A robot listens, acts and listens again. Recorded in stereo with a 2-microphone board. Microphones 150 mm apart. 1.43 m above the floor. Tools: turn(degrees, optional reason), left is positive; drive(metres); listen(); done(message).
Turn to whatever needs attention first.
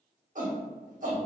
turn(degrees=-65, reason="The shout: about 65° right or 115° right.")
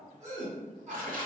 turn(degrees=-50, reason="So it is at 50° right.")
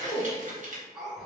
done("Found it: a shout, straight ahead.")